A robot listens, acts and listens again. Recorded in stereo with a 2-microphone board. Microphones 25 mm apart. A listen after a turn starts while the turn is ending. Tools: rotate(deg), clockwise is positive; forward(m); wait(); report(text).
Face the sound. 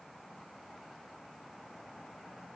wait()
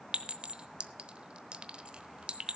rotate(50)
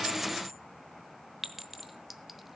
rotate(10)
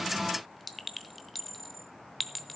report("Facing the clink.")